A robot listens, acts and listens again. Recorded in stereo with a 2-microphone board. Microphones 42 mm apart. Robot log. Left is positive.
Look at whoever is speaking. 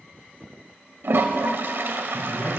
note: The man speaking: about 70° left or 110° left.
cmd yaw +70
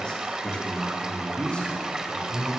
note: So it is at 25° left.
cmd yaw +25
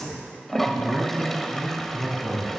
end: Found it: a man speaking, straight ahead, over 4 m away.